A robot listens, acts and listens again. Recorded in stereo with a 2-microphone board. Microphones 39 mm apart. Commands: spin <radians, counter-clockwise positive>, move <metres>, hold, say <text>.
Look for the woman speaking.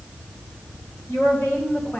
spin 1.13
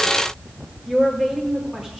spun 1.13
spin -0.17
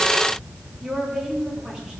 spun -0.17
spin -0.26
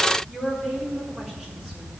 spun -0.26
say Found it: a woman speaking, straight ahead, over 4 m away.